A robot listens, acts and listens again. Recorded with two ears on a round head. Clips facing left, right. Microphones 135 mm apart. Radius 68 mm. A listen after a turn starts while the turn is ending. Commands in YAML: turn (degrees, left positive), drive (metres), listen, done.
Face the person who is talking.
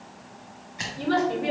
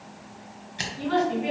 turn: 45
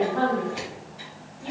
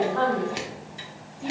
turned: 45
turn: -15
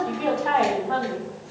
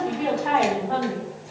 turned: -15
turn: -15
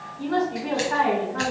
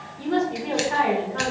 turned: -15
turn: -35
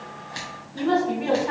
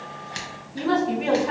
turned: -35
turn: -10
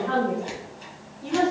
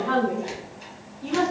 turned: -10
done: "Found it: a woman speaking, straight ahead, 1 to 2 m away."